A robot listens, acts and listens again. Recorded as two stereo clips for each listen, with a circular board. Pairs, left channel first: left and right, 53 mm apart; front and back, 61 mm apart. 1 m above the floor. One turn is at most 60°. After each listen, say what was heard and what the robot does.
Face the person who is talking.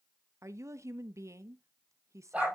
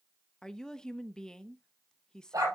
The woman speaking: 80° right. Turn 60° right.
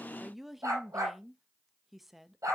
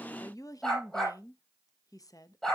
Found it: a woman speaking, straight ahead.